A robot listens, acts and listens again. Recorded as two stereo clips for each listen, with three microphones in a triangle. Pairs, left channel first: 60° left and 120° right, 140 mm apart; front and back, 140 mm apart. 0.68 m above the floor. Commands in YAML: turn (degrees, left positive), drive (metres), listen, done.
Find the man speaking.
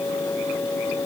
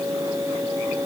listen: true
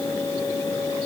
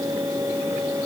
listen: true
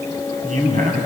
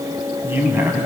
turn: -105
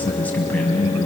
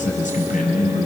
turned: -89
turn: -15
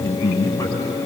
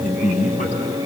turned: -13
done: "Facing the man speaking, over 4 m away."